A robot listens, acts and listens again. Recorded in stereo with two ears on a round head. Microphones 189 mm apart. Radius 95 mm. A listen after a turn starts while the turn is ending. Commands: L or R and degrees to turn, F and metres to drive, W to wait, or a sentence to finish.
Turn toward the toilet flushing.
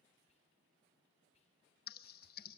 W
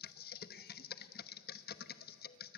W
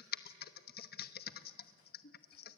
I can't make out a toilet flushing, only typing on a keyboard.